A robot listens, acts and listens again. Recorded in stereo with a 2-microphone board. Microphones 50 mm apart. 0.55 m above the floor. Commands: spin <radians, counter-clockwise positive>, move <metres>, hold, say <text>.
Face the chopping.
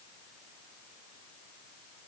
hold
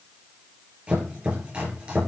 spin -0.44
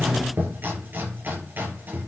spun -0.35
spin -2.36
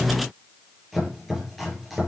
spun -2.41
say Found it: chopping, straight ahead.